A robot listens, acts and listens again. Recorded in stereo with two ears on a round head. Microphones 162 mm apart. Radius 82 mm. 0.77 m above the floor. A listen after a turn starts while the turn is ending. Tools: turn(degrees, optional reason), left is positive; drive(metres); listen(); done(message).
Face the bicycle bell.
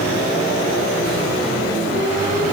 listen()
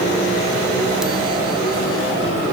listen()
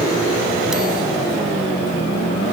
done("I can't make out a bicycle bell.")